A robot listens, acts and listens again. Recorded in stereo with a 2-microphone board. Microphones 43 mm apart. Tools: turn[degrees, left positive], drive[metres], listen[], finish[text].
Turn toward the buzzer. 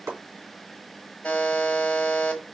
Thought: The buzzer: about 30° left or 150° left.
Action: turn[30]
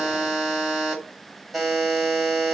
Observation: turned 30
Action: finish[Found it: a buzzer, straight ahead.]